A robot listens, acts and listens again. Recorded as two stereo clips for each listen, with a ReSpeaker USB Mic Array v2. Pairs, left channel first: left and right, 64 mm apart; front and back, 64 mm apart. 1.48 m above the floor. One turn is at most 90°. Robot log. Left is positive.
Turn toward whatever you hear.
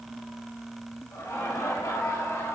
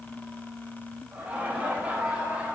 note: The laughter: 115° left.
cmd yaw +90
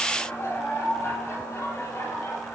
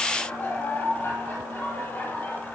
note: The laughter is now 50° left.
cmd yaw +50
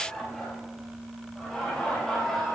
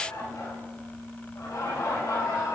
end: Facing the laughter.